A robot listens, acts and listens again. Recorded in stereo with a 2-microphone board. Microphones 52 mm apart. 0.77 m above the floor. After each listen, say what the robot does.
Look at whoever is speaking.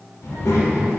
Turn 90° left.
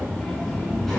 Facing the child speaking, 1 to 2 m away.